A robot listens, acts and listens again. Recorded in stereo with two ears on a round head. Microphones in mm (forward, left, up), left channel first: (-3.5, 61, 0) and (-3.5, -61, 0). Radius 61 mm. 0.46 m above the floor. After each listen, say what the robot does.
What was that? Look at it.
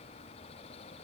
Keep listening.
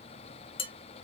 Turn 40° left.
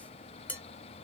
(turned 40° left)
Turn 10° left.
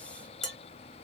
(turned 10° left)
Found it: dishes clattering, straight ahead.